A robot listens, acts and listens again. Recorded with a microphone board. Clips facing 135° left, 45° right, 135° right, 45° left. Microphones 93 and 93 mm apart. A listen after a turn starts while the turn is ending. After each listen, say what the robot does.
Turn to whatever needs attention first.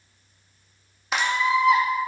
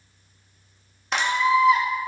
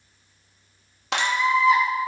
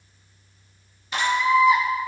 Turn 120° left.
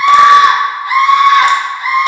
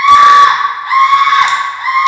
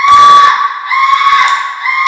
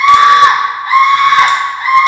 Turn 10° right.
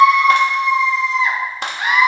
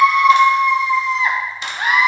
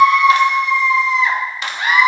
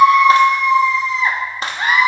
Facing the scream, 2 to 4 m away.